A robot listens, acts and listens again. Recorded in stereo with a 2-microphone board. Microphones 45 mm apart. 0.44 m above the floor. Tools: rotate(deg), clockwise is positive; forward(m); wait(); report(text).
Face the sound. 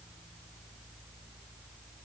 wait()
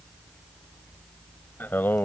rotate(-50)
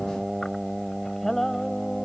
rotate(-10)
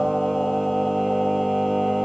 report("Facing the singing.")